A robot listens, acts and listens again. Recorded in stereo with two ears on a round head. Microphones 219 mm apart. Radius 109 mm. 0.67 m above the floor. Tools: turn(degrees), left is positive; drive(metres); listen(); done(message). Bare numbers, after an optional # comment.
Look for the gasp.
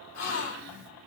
# The gasp: about 70° left or 110° left.
turn(70)
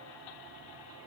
listen()
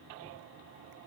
done("I heard a gasp, but can't make it out now. It was about straight ahead or 40° left.")